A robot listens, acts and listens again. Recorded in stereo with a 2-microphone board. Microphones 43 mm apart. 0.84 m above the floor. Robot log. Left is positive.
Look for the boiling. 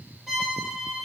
cmd idle
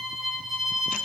cmd idle
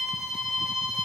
end: I can't make out boiling, only a violin.